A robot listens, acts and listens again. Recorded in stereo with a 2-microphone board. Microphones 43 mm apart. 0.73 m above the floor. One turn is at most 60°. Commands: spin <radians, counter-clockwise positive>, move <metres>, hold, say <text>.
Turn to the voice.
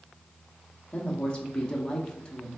spin 0.35
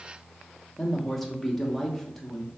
say Facing the woman speaking.